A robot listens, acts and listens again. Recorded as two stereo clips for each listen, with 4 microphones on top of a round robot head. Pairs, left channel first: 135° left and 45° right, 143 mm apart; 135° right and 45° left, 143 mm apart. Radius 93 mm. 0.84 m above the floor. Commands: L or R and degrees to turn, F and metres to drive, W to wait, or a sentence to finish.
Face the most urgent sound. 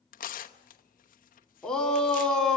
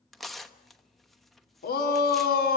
R140
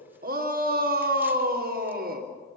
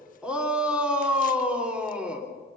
R40
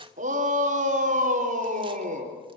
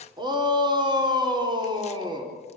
R15
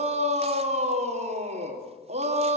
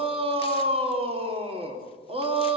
Found it: a shout, straight ahead, 2 to 4 m away.